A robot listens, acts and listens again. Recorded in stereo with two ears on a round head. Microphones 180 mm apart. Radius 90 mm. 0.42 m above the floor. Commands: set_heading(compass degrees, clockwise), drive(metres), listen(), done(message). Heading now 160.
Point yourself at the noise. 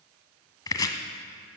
set_heading(140)
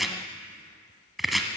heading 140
done("Found it: chopping, straight ahead.")